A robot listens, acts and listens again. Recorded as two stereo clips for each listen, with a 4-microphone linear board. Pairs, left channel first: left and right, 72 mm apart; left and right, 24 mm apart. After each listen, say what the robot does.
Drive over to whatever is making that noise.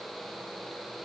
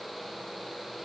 Keep listening.
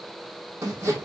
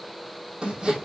Turn 40° right.
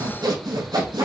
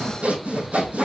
Turn 100° right.
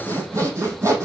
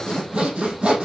Turn 40° right.
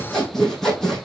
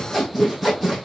Drive 1.0 m forward.
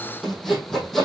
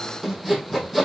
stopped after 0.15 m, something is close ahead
Blocked. The sawing is further on, straight ahead.